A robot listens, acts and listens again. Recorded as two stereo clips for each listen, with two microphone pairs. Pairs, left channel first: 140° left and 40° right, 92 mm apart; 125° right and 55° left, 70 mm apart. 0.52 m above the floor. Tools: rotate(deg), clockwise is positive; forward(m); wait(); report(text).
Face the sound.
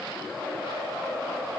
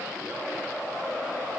wait()
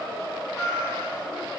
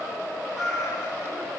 rotate(160)
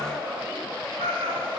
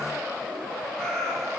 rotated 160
rotate(40)
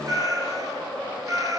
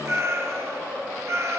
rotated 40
rotate(-10)
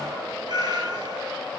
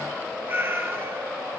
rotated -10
report("Facing the cat meowing.")